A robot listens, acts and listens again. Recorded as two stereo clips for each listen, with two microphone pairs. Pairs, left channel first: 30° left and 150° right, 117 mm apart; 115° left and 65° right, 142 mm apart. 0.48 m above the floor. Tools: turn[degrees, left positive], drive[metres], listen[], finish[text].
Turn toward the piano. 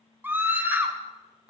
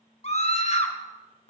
Action: listen[]
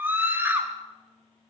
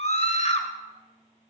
Action: listen[]
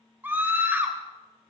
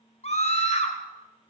Action: finish[I can't make out a piano to turn to.]